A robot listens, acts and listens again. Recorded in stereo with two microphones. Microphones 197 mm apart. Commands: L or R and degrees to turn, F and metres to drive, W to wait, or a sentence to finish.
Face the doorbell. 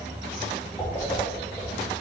W
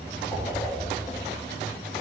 W
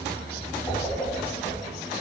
I can't make out a doorbell to turn to.